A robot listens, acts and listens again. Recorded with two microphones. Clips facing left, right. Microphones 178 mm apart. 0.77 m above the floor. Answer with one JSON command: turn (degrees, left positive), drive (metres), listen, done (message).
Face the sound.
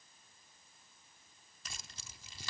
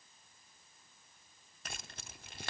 {"turn": -60}
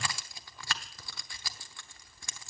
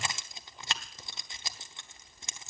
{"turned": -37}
{"turn": -20}
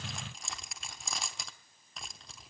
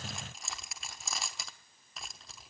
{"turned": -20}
{"done": "Facing the keys jangling."}